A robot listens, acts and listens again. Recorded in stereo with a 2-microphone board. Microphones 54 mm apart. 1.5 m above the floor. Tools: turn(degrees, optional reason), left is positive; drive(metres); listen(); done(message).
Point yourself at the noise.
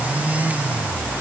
listen()
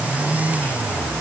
listen()
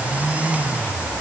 done("I can't make out anything to turn to.")